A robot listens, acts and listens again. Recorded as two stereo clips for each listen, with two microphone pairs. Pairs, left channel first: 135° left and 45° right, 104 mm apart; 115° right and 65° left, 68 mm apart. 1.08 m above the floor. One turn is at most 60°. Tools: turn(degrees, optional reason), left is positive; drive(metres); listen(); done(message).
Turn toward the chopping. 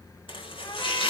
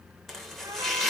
turn(degrees=60, reason="The chopping: 160° left.")
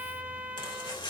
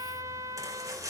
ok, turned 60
turn(degrees=60, reason="The chopping is now 100° left.")
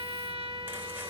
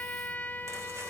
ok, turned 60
turn(degrees=40, reason="Nothing new. It was at 40° left.")
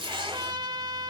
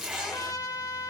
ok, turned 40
turn(degrees=-15, reason="The chopping is now 15° right.")
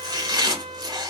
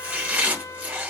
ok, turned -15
done("Found it: chopping, straight ahead.")